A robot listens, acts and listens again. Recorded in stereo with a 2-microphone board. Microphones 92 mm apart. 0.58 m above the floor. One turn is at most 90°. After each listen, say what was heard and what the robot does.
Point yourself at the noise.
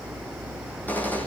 The gunshot: about 20° left or 160° left. Turn 20° left.
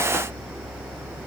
Keep listening.
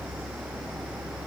I heard a gunshot, but can't make it out now. It was about straight ahead or 140° left.